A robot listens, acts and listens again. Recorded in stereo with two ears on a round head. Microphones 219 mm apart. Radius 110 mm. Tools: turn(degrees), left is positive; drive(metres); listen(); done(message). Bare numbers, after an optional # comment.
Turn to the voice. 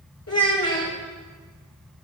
# The child speaking: about 70° left or 110° left.
turn(70)
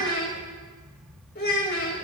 # So it is at 40° left.
turn(40)
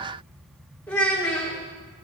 done("Found it: a child speaking, straight ahead.")